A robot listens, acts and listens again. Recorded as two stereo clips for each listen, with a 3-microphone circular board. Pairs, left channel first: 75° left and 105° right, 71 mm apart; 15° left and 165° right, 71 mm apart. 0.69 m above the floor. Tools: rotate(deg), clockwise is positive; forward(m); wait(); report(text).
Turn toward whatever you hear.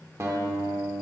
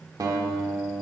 rotate(150)
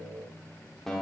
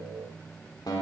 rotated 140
rotate(10)
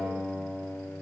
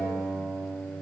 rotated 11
report("Facing the guitar, 1 to 2 m away.")